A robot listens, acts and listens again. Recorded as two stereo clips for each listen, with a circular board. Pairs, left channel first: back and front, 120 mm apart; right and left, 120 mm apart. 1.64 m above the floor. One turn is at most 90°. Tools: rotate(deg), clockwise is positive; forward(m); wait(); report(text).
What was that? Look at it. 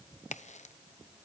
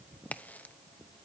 rotate(90)
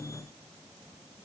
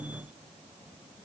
rotate(75)
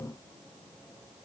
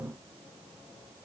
report("Facing where the crack came from. I can't hear it now.")